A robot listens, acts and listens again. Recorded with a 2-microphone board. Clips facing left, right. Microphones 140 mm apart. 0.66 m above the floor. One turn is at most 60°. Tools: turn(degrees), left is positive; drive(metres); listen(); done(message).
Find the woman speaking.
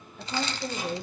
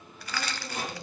turn(degrees=60)
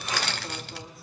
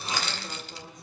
done("Facing the woman speaking, 2 to 4 m away.")